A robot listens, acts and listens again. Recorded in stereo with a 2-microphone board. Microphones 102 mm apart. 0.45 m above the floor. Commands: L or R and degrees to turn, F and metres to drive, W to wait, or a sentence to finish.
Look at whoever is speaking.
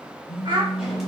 R55
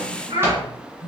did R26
R95
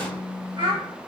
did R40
R55
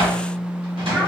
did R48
R10
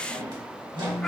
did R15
W
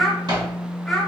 Facing the child speaking, 1 to 2 m away.